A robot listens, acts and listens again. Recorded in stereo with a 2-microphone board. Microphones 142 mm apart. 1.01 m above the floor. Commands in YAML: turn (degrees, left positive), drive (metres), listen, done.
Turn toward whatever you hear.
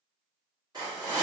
turn: -30
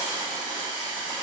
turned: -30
done: "Facing the hiss."